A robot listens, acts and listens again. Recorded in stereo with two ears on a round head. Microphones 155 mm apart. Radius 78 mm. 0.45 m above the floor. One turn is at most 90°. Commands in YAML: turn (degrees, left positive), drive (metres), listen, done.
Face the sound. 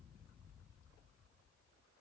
listen: true
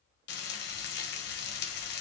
turn: 65
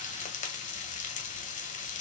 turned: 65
turn: 45
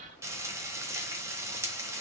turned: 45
turn: -15
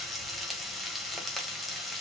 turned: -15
done: "Found it: frying, straight ahead."